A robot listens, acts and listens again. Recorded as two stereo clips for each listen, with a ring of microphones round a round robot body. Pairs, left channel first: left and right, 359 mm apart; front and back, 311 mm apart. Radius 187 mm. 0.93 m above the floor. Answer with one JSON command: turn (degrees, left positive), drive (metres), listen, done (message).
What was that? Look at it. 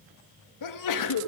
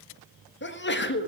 {"turn": 55}
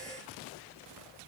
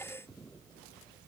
{"done": "I heard a sneeze from this way, but can't make it out now."}